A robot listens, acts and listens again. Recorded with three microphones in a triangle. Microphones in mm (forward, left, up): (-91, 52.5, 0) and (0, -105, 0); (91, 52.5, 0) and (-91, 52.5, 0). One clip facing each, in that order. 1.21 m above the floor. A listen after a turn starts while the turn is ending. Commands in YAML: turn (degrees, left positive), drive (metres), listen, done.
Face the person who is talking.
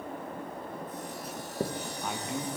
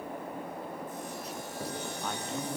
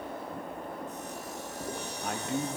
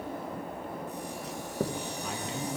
turn: 40
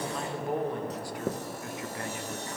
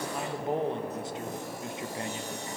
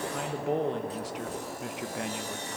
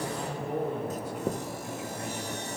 done: "Found it: a man speaking, straight ahead, 1 to 2 m away."